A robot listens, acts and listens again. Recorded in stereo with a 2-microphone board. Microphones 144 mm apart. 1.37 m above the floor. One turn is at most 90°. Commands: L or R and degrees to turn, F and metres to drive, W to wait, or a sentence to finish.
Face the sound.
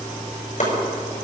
L60
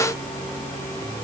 W
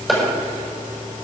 Found it: chopping, straight ahead.